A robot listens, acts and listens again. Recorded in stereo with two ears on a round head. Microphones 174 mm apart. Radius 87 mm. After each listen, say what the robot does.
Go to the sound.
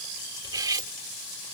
Turn 20° right.
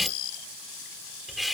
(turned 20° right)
Drive 1.0 m forward.
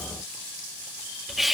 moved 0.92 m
Drive 1.0 m forward.
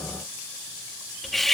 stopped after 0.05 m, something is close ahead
I am next to the cutlery clinking.